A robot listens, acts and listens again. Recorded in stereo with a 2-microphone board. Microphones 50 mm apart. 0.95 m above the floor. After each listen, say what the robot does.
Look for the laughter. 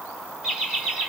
Turn 30° right.
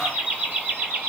Turn 150° right.
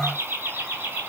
Turn 40° right.
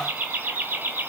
Turn 30° right.
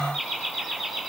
Found it: laughter, straight ahead.